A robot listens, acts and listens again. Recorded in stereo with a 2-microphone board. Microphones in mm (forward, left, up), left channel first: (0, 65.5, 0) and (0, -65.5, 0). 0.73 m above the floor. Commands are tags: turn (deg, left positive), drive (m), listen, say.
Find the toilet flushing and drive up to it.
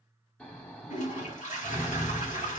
<turn deg="70"/>
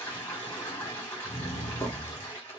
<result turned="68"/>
<turn deg="20"/>
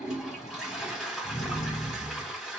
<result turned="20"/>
<drive m="1.0"/>
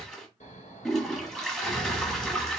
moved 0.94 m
<drive m="1.0"/>
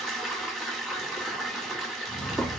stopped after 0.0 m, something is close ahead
<say>Arrived at the toilet flushing, straight ahead.</say>